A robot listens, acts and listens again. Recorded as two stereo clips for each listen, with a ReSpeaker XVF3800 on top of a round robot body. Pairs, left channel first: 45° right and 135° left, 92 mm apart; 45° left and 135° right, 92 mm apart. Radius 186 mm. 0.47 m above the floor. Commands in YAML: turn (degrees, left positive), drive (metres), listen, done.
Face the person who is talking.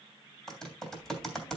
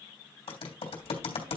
turn: -140
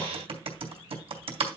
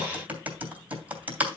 turn: -20
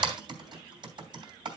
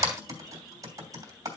listen: true
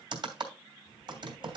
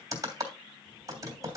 done: "Facing the child speaking."